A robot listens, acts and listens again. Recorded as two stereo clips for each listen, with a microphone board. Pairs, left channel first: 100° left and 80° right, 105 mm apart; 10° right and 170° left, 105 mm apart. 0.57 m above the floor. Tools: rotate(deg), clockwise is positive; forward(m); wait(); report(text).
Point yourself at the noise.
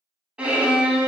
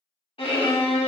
report("Found it: a violin, straight ahead.")